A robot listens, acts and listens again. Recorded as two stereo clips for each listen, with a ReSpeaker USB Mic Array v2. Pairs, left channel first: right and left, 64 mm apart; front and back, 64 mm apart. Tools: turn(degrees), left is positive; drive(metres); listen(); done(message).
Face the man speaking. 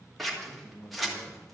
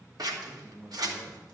turn(degrees=-120)
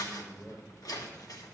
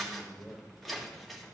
turn(degrees=-25)
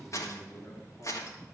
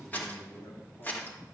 done("Facing the man speaking.")